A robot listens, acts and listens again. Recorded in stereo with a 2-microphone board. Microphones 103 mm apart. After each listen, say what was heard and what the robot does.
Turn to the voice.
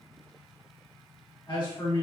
The man speaking: about 50° left or 130° left. Turn 50° left.
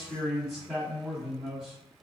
Facing the man speaking.